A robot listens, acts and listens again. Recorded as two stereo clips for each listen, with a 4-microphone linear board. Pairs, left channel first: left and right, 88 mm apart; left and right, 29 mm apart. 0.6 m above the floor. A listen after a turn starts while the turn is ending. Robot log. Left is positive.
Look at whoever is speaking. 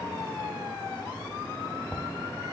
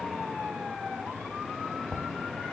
cmd idle
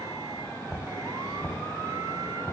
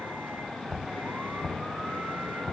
cmd idle
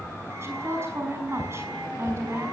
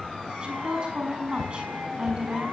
note: The woman speaking: about 30° right or 150° right.
cmd yaw -30
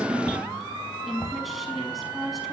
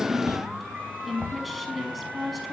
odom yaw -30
end: Found it: a woman speaking, straight ahead.